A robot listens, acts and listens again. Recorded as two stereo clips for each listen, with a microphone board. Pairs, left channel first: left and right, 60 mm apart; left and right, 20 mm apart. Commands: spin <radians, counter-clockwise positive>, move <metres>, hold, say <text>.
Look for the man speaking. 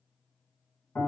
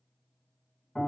hold
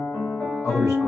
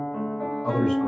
spin 1.05
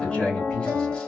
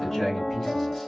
spin 0.35
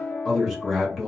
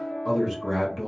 say Facing the man speaking.